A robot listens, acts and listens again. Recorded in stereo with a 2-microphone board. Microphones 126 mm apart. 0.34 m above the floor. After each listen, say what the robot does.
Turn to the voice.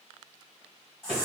Keep listening.
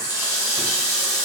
Keep listening.
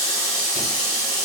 I can't make out anyone speaking to turn to.